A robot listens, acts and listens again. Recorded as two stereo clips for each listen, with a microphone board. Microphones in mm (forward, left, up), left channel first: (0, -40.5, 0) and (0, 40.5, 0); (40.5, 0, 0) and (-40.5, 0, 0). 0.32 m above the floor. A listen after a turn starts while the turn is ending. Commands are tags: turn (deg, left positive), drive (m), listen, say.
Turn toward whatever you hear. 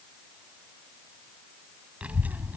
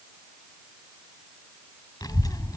<turn deg="30"/>
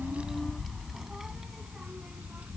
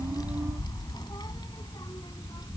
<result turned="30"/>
<turn deg="20"/>
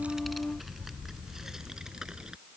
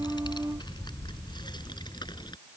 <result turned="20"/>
<turn deg="10"/>
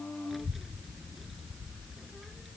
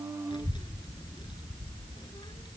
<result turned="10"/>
<say>Found it: a child speaking, straight ahead.</say>